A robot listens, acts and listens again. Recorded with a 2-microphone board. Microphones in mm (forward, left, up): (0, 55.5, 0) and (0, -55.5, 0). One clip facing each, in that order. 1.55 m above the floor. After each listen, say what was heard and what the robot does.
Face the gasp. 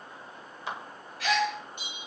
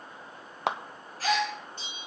The gasp: about 35° right or 145° right. Turn 35° right.
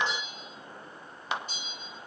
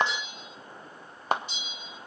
Keep listening.
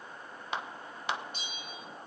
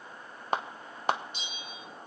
I heard a gasp, but can't make it out now. It was about straight ahead or 110° right.